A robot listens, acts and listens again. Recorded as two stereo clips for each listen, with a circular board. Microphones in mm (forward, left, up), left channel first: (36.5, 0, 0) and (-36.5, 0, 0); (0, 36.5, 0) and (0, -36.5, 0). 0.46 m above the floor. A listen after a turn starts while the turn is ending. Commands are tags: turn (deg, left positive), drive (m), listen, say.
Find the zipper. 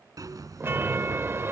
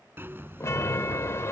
<turn deg="-145"/>
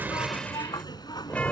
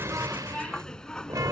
<turn deg="10"/>
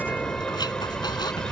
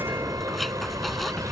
<say>Facing the zipper.</say>